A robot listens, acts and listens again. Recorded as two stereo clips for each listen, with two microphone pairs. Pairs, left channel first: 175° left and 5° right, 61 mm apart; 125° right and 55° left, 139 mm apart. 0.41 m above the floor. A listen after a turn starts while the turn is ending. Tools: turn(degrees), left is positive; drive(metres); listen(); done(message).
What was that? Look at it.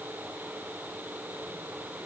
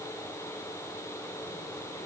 listen()
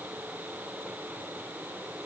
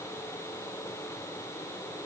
listen()
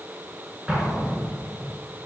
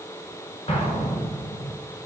turn(degrees=-80)
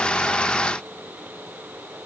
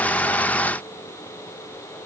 done("I heard an explosion from this way, but can't make it out now.")